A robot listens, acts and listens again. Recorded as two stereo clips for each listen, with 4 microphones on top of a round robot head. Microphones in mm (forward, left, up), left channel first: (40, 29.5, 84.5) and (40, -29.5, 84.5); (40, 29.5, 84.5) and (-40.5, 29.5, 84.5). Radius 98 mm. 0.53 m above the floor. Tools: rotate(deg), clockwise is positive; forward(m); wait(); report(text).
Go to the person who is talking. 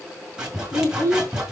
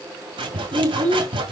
rotate(-150)
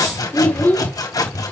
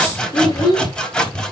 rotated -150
rotate(-40)
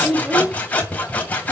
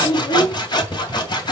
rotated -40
rotate(15)
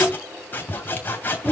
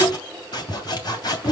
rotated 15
rotate(10)
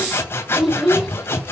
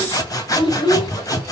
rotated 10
forward(1.0)
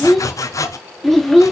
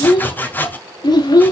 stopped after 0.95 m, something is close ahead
report("I am next to the child speaking.")